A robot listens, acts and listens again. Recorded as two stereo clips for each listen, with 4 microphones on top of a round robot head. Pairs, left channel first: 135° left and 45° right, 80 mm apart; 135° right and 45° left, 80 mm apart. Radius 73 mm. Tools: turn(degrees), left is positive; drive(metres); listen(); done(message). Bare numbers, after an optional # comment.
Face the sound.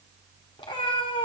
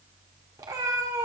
# The cat meowing: 105° left.
turn(105)
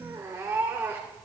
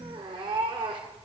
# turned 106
# The cat meowing is now 15° left.
turn(15)
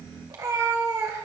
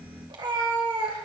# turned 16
# The cat meowing is now 10° left.
turn(10)
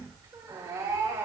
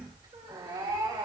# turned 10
done("Facing the cat meowing, 2 to 4 m away.")